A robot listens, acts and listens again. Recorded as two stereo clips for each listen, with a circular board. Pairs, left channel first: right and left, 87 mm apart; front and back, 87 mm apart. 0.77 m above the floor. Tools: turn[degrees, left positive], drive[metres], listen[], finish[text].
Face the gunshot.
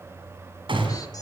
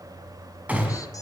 Thought: The gunshot: 110° left.
Action: turn[110]
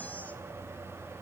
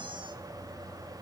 Action: finish[I heard a gunshot from this way, but can't make it out now.]